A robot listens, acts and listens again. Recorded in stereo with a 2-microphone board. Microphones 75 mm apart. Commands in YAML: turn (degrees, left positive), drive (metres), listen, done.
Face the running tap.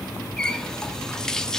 turn: 30
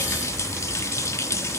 turn: 140
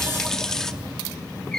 done: "Found it: a running tap, straight ahead, 1 to 2 m away."